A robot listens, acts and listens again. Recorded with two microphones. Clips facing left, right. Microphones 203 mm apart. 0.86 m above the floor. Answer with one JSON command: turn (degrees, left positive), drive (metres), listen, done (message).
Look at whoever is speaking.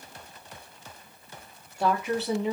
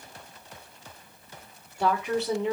{"turn": 30}
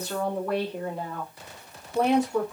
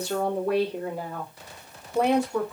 {"turn": 30}
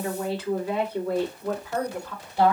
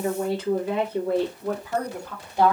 {"turn": -15}
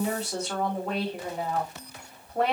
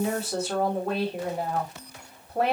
{"done": "Found it: a woman speaking, straight ahead, 2 to 4 m away."}